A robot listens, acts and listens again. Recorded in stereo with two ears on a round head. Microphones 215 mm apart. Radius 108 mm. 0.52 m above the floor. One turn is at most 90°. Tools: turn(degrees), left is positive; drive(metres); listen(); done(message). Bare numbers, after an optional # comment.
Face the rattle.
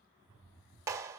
# The rattle: about 15° left or 165° left.
turn(15)
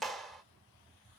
done("Found it: a rattle, straight ahead, 1 to 2 m away.")